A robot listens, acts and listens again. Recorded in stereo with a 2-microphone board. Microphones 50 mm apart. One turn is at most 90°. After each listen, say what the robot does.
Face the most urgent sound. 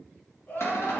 Turn 35° left.
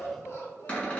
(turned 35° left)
Turn 90° left.
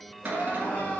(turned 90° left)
Turn 40° left.
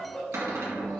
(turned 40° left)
Turn 15° left.
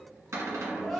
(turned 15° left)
Found it: crying, straight ahead, 1 to 2 m away.